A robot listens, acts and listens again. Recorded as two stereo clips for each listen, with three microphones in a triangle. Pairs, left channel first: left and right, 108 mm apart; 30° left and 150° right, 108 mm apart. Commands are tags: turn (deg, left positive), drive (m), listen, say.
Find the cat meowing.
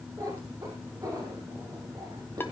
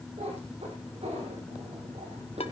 <turn deg="-140"/>
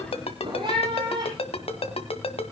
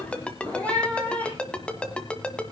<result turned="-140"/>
<turn deg="-45"/>
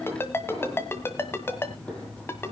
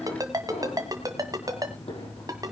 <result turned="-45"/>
<turn deg="10"/>
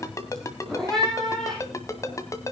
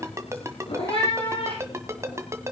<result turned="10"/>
<say>Found it: a cat meowing, straight ahead.</say>